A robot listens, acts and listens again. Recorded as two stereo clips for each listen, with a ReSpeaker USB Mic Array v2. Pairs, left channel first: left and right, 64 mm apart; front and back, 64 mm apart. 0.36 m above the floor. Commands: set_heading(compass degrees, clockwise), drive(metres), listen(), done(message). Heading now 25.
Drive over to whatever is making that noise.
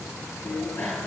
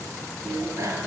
set_heading(240)
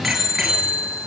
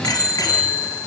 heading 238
drive(1.0)
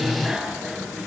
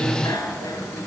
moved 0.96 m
drive(1.0)
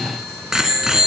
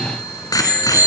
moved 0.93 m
drive(1.0)
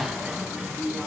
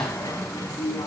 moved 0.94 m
set_heading(248)
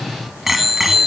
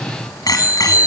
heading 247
drive(1.0)
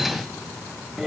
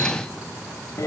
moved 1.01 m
drive(1.0)
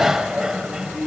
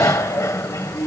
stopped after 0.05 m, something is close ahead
set_heading(257)
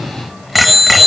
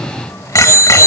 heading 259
done("I am next to the bicycle bell.")